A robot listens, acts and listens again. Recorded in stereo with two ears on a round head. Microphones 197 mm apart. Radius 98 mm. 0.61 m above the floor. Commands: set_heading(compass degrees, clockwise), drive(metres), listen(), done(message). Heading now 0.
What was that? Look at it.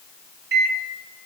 set_heading(45)
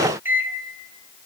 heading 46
set_heading(56)
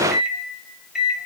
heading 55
done("Found it: a microwave, straight ahead.")